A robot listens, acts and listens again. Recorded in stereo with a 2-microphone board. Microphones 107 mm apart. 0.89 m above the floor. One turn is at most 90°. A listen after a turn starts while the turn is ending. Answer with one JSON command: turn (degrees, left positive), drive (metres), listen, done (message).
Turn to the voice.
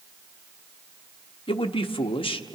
{"turn": 55}
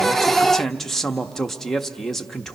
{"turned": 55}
{"done": "Facing the man speaking."}